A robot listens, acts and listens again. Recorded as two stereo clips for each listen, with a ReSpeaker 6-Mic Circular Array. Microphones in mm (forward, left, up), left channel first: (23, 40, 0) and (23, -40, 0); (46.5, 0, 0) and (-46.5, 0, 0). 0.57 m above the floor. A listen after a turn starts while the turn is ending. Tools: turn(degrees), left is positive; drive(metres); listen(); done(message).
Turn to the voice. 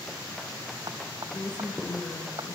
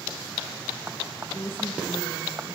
turn(degrees=65)
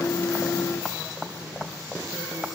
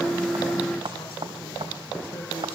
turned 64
listen()
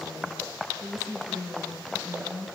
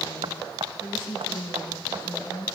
done("Found it: a woman speaking, straight ahead.")